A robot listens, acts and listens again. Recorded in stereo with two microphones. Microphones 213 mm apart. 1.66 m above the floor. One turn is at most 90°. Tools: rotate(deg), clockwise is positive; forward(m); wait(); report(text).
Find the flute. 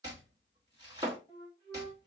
rotate(-20)
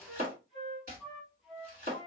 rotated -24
report("Found it: a flute, straight ahead.")